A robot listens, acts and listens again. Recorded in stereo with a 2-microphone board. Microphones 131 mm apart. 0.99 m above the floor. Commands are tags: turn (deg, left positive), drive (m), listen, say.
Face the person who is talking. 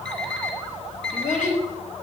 <turn deg="90"/>
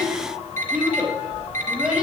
<say>Facing the child speaking, over 4 m away.</say>